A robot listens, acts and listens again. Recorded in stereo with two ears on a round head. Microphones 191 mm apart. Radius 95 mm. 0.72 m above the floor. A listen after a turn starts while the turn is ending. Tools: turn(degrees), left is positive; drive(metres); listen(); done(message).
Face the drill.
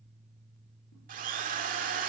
turn(degrees=-40)
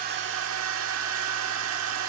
turn(degrees=-95)
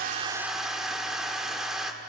done("Found it: a drill, straight ahead, 1 to 2 m away.")